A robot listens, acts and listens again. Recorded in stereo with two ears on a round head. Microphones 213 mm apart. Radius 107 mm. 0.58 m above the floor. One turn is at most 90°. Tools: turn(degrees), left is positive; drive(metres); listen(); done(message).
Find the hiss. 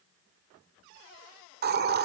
turn(degrees=-45)
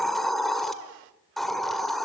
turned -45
done("Found it: a hiss, straight ahead, 1 to 2 m away.")